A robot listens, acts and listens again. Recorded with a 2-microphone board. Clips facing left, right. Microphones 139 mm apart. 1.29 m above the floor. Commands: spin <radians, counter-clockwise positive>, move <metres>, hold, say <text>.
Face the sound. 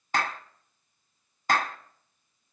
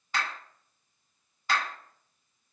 spin 0.87
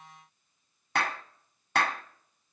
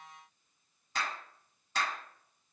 spin 1.40
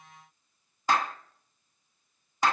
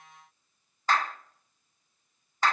spin 0.26
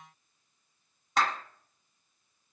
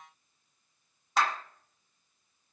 say Found it: a clap, straight ahead.